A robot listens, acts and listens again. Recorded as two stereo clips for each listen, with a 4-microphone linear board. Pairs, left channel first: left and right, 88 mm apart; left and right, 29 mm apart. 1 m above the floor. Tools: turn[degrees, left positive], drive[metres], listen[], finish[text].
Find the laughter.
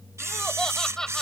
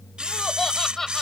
Action: turn[30]
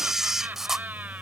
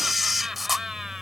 Thought: So it is at 20° right.
Action: turn[-20]
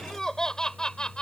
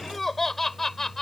Thought: The laughter is now 10° left.
Action: turn[10]
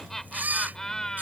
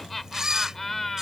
Action: finish[Facing the laughter.]